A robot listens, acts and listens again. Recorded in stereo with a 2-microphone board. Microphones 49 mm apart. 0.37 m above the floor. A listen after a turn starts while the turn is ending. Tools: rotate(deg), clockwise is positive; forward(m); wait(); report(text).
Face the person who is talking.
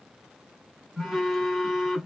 wait()
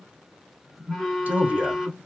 rotate(35)
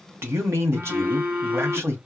rotate(105)
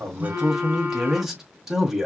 rotate(10)
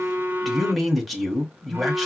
report("Found it: a man speaking, straight ahead.")